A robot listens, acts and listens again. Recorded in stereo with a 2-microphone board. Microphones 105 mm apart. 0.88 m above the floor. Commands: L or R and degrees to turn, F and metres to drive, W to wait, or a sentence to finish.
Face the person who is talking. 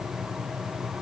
W
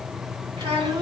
R50
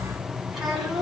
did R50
Facing the child speaking, 2 to 4 m away.